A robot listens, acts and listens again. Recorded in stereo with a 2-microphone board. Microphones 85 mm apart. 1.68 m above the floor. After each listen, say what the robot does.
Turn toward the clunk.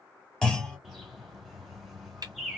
Turn 30° left.
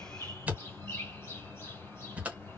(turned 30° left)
Keep listening.
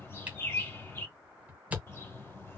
I heard a clunk, but can't make it out now. It was about 20° right or 140° left.